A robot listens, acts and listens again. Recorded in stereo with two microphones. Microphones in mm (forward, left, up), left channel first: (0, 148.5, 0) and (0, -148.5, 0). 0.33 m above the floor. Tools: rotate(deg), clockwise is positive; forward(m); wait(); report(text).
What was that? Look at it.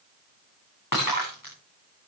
rotate(-90)
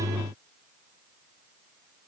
report("I heard breaking glass from this way, but can't make it out now.")